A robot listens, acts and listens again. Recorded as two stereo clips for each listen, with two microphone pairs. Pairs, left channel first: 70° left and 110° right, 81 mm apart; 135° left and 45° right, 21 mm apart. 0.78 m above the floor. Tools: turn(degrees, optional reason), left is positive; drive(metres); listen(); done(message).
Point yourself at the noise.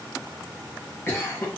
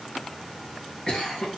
turn(degrees=120, reason="The cough: 120° left.")
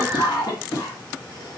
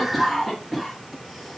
turn(degrees=55, reason="The cough is now 55° left.")
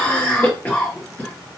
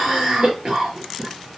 done("Facing the cough.")